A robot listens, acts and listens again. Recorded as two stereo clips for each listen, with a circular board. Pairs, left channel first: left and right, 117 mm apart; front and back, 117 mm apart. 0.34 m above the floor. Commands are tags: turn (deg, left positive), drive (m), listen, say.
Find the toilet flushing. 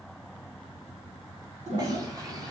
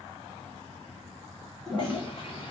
<turn deg="-85"/>
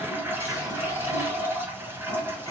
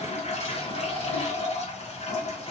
<turn deg="-20"/>
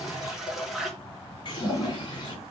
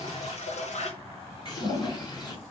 <say>Facing the toilet flushing, 1 to 2 m away.</say>